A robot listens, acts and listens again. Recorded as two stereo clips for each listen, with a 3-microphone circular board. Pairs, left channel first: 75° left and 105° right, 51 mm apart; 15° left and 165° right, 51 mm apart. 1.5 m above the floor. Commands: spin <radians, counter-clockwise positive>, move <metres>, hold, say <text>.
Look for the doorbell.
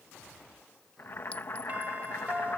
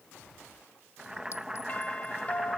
spin -0.79
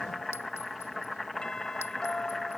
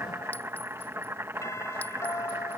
say Found it: a doorbell, straight ahead.